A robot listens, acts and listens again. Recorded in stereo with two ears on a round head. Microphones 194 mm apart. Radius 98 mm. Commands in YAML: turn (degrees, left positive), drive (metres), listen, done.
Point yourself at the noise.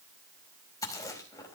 turn: 15
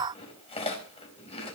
turn: 150
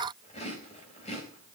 turn: 30
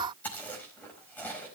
turn: 10
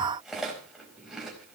done: "Facing the chewing."